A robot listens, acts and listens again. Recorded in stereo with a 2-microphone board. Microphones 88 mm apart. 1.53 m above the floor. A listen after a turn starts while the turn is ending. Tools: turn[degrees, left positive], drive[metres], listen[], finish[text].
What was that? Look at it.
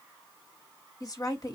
Thought: The woman speaking: about 40° left or 140° left.
Action: turn[40]
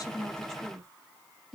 Action: finish[Found it: a woman speaking, straight ahead.]